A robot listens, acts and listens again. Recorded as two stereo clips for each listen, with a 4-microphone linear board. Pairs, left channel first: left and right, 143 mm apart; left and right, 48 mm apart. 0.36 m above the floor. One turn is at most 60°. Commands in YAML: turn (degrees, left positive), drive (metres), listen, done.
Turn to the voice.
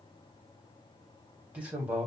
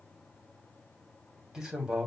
turn: -30
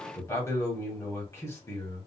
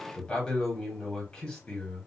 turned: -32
turn: 20
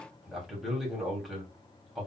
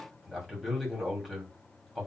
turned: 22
done: "Found it: a man speaking, straight ahead."